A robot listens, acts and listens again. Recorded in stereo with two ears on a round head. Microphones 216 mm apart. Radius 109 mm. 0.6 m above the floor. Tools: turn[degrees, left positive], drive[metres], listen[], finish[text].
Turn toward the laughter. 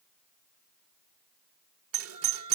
Thought: The laughter: about 20° right or 160° right.
Action: turn[-20]
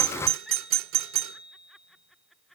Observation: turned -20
Action: finish[Facing the laughter.]